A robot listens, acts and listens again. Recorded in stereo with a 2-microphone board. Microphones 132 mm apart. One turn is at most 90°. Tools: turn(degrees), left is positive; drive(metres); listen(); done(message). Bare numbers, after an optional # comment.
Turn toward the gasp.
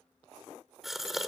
turn(30)
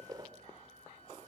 # So it is at 30° right.
turn(-30)
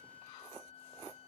done("Facing where the gasp came from. I can't hear it now.")